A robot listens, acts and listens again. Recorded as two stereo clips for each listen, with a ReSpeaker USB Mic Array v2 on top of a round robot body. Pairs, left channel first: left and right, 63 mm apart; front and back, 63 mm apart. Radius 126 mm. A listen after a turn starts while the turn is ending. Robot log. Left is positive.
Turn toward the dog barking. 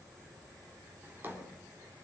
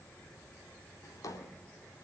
cmd idle
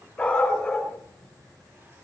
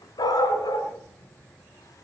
note: The dog barking: 10° left.
cmd yaw +10
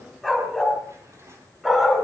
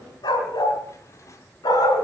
end: Found it: a dog barking, straight ahead.